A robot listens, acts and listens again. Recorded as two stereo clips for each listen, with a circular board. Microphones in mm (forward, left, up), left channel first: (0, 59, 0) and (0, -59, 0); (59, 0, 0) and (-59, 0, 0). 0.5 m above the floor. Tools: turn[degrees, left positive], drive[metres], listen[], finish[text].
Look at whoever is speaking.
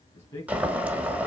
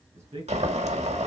Thought: The man speaking: 155° left.
Action: turn[155]
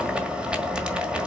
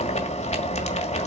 Action: listen[]
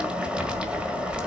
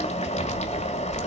Action: listen[]
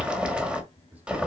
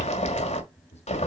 Thought: The man speaking is now 15° right.
Action: turn[-15]
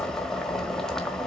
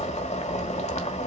Action: listen[]
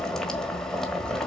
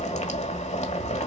Action: listen[]
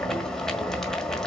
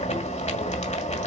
Action: finish[I heard a man speaking from this way, but can't make it out now.]